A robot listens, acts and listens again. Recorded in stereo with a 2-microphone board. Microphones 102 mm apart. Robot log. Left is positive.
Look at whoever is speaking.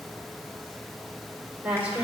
note: The woman speaking: about 15° right or 165° right.
cmd yaw -15
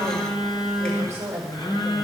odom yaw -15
note: So it is at 150° right.
cmd yaw -150
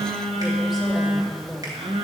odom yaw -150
end: Found it: a woman speaking, straight ahead.